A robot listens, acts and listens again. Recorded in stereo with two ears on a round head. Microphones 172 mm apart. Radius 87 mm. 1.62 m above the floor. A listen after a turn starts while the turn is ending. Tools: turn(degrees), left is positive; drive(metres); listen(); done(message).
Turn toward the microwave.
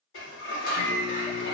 turn(degrees=50)
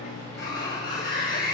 listen()
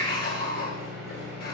done("Facing the microwave, over 4 m away.")